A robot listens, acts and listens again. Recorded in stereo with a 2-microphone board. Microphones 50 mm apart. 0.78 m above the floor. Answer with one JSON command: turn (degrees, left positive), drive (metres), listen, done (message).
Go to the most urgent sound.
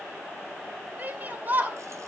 {"turn": -35}
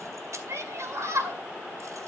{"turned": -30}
{"turn": -110}
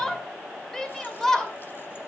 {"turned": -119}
{"turn": 10}
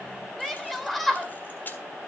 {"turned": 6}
{"drive": 1.0}
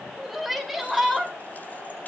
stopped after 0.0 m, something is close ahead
{"done": "Something is in my way. I am facing the shout but have not reached it."}